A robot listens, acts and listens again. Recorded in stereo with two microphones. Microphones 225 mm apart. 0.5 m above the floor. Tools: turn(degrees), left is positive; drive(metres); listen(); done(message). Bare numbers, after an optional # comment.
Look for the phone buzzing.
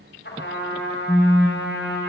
turn(30)
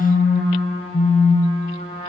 # So it is at 135° left.
turn(135)
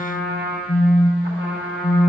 # The phone buzzing is now 40° left.
turn(40)
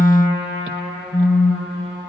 # The phone buzzing is now 25° left.
turn(25)
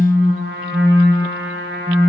# The phone buzzing is now 10° right.
turn(-10)
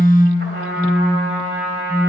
done("Facing the phone buzzing, under 1 m away.")